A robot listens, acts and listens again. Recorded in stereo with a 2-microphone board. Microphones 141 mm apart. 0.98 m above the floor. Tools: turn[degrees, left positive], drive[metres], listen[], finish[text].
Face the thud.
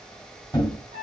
Thought: The thud: about 30° left or 150° left.
Action: turn[30]
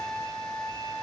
Action: listen[]
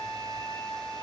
Action: finish[I heard a thud, but can't make it out now. It was about straight ahead or 120° left.]